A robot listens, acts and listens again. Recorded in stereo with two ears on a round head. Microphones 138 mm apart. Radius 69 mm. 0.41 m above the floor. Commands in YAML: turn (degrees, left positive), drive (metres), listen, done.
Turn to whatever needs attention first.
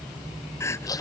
turn: 15
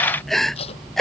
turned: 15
done: "Found it: crying, straight ahead."